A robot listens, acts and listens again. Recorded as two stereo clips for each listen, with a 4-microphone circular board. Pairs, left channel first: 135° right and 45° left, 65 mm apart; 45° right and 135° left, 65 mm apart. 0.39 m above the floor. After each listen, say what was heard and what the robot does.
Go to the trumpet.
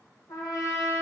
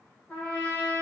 The trumpet: 115° right. Turn 115° right.
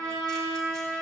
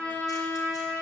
The trumpet is now 25° left. Turn 25° left.
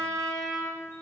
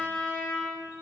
The trumpet is now 15° left. Turn 15° left.
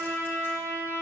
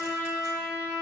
Drive 1.0 m forward.
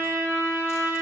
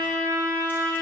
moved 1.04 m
Drive 1.0 m forward.
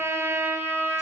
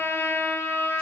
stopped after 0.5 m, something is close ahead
Arrived at the trumpet, straight ahead.